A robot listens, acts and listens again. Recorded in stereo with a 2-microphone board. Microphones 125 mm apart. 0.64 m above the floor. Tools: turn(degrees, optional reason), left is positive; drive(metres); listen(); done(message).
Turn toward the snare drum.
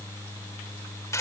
listen()
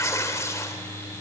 listen()
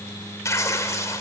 done("I can't make out a snare drum, only tearing paper.")